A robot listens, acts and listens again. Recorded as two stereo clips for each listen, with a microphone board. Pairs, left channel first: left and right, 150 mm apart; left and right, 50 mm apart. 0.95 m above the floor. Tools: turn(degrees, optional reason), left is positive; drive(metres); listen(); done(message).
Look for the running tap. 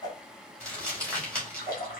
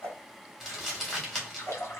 turn(degrees=70, reason="The running tap: about 70° left or 110° left.")
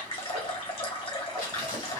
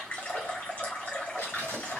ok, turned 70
turn(degrees=40, reason="So it is at 40° left.")
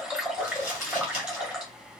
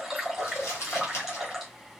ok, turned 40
done("Facing the running tap.")